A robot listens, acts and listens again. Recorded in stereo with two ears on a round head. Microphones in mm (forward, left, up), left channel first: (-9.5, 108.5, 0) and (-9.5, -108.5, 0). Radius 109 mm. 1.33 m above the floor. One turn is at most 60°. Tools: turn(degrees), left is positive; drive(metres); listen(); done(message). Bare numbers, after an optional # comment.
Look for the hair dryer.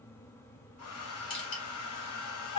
# The hair dryer: about 70° left or 110° left.
turn(60)
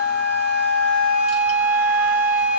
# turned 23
listen()
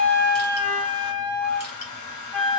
# So it is at 85° left.
turn(60)
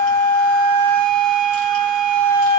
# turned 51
# Nothing new. It was at 35° left.
turn(35)
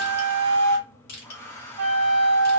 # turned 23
# The hair dryer is now 10° left.
turn(10)
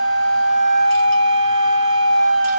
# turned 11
listen()
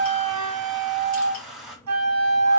done("Facing the hair dryer, 1 to 2 m away.")